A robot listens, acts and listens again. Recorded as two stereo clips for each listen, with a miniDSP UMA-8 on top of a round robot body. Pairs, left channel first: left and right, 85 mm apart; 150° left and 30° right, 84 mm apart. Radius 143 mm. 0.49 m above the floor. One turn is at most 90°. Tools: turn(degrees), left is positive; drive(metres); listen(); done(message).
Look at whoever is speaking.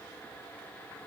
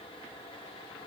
listen()
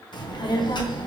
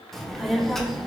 turn(degrees=65)
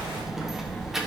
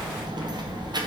done("Facing the child speaking, 1 to 2 m away.")